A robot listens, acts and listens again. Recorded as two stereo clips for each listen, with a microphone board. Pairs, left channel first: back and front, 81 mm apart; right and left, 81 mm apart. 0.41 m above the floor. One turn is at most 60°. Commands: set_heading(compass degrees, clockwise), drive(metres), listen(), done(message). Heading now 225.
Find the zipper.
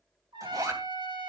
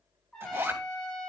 set_heading(190)
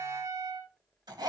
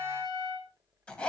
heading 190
set_heading(205)
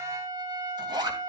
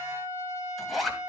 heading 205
done("Found it: a zipper, straight ahead, 2 to 4 m away.")